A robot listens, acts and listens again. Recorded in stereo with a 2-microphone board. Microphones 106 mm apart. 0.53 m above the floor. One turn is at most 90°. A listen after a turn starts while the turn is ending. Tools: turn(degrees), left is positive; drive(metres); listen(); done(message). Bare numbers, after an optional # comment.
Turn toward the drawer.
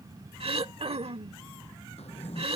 turn(90)
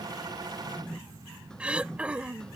done("Facing the drawer.")